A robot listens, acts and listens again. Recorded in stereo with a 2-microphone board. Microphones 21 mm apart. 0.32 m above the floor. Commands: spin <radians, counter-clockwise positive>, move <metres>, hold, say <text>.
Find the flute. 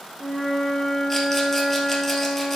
spin 0.70
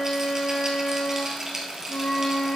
spin 1.75
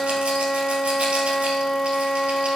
spin 0.70
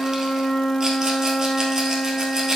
spin -0.44
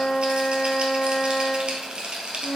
say Facing the flute.